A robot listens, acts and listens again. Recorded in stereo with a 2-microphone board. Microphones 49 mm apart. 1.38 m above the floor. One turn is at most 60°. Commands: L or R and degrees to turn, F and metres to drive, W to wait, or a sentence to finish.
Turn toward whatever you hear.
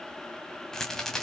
L30
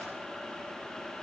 W
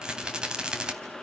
R25
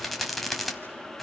Facing the rattle.